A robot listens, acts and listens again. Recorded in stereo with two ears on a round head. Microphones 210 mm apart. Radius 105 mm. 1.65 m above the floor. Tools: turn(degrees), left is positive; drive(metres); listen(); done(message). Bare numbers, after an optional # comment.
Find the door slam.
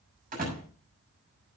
# The door slam: about 35° right or 145° right.
turn(-35)
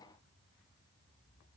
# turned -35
listen()
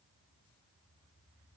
done("I heard a door slam, but can't make it out now. It was about straight ahead or 110° right.")